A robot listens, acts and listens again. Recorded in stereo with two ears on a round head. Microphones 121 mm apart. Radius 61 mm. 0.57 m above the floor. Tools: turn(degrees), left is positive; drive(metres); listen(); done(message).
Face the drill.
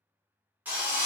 turn(degrees=-30)
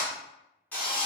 turn(degrees=15)
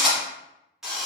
done("Facing the drill.")